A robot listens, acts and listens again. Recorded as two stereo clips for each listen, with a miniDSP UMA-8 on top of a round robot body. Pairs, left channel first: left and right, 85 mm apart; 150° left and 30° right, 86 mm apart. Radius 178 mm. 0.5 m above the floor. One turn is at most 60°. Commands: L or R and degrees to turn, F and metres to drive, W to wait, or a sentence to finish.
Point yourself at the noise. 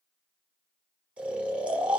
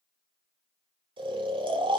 R15
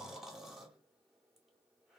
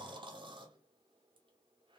Facing the snoring, under 1 m away.